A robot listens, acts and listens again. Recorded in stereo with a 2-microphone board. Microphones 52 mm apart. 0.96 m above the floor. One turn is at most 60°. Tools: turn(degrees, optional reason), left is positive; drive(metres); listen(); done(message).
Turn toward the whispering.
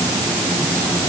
listen()
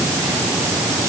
listen()
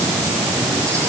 done("I can't make out whispering.")